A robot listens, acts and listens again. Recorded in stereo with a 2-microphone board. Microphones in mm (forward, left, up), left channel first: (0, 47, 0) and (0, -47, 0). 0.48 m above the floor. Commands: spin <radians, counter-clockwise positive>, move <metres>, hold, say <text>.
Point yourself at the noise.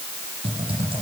spin -1.57
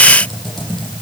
say Found it: typing on a keyboard, straight ahead, over 4 m away.